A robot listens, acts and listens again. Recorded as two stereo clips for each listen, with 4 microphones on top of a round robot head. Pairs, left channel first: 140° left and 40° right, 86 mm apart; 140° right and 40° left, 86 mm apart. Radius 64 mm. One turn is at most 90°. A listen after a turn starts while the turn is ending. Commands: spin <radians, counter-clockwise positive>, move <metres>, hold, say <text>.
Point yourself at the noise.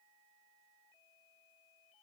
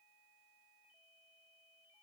hold
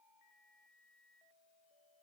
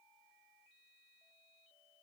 hold
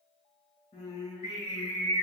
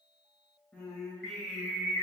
spin 1.57
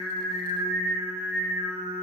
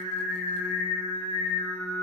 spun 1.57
spin 0.44
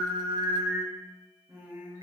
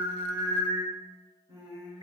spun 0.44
say Found it: singing, straight ahead.